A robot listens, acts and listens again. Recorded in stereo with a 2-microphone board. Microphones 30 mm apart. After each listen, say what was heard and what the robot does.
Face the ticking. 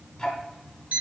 The ticking: about 25° left or 155° left. Turn 25° left.
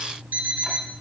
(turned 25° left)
Found it: ticking, straight ahead.